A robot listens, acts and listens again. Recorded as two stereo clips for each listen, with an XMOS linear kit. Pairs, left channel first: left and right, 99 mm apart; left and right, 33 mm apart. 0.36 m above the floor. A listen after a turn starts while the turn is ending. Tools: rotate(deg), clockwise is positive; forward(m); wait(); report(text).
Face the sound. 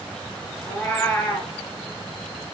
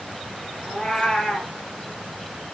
rotate(-15)
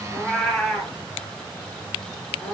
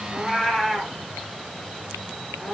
report("Facing the cat meowing, 1 to 2 m away.")